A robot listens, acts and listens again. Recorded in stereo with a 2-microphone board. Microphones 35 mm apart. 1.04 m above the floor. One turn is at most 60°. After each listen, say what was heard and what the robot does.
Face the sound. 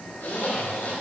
The zipper: about 60° left or 120° left. Turn 60° left.
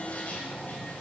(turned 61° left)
Keep listening.
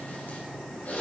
So it is at 60° left. Turn 60° left.
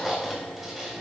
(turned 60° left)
Found it: a zipper, straight ahead.